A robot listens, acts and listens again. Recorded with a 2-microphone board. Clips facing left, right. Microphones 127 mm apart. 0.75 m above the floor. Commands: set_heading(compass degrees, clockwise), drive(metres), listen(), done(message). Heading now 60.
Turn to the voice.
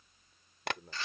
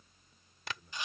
set_heading(355)
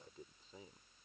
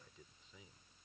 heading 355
set_heading(310)
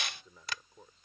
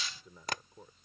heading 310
done("Facing the man speaking.")